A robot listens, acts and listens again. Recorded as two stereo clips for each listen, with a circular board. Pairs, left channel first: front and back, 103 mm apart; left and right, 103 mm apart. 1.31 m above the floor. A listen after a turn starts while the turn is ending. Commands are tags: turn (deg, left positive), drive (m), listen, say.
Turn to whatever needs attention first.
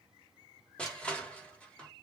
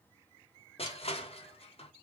<listen/>
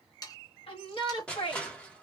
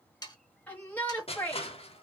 <turn deg="15"/>
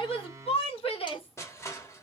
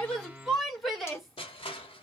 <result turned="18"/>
<say>Found it: a shout, straight ahead.</say>